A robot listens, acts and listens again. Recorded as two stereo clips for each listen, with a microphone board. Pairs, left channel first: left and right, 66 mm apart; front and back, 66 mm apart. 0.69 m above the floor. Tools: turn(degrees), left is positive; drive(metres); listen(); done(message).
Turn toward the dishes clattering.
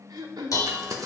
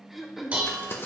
turn(degrees=115)
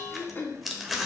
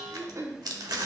turn(degrees=-10)
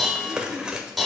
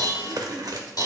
done("Facing the dishes clattering, 1 to 2 m away.")